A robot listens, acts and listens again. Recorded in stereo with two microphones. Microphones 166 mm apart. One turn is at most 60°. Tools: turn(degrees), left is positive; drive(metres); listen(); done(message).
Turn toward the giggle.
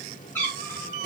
listen()
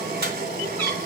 listen()
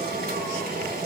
done("I can't make out a giggle, only boiling and a cat meowing.")